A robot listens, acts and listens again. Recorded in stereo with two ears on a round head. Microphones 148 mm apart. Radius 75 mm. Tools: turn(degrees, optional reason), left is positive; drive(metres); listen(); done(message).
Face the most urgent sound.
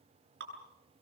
listen()
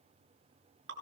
listen()
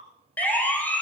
turn(degrees=30)
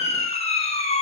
turn(degrees=140, reason="So it is at 140° left.")
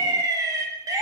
turn(degrees=-20, reason="The siren is now 20° right.")
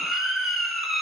done("Found it: a siren, straight ahead, over 4 m away.")